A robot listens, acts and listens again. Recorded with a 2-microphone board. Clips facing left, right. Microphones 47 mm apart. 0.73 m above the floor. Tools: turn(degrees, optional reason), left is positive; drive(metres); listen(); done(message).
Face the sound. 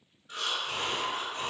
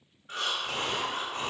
turn(degrees=-60, reason="The breathing: about 60° right or 120° right.")
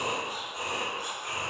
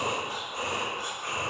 turn(degrees=-55, reason="So it is at 55° right.")
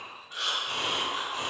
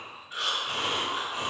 turn(degrees=-15, reason="The breathing is now 15° right.")
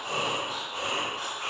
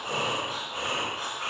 done("Facing the breathing.")